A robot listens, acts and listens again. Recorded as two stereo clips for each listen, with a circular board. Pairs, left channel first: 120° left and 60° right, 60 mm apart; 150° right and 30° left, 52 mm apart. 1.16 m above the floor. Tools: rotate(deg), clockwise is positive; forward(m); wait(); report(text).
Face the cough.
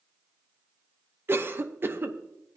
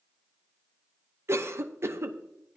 report("Facing the cough.")